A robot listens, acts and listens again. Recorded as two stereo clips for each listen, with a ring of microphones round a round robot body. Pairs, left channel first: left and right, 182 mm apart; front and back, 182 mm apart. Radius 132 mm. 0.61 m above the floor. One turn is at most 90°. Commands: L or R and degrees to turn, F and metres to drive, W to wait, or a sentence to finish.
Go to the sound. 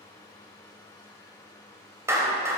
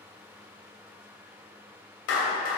R15
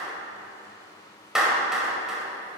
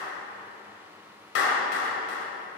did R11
F1.0
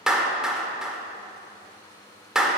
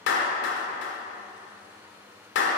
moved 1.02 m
F1.0
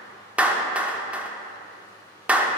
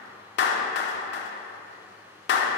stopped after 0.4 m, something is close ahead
Arrived at the clap, straight ahead.